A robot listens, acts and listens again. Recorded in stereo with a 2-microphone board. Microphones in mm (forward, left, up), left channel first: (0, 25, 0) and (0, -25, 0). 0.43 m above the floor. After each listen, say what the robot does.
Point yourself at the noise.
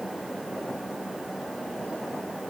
Keep listening.
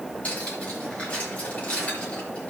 Turn 30° left.
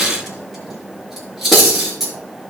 Facing the cutlery clinking.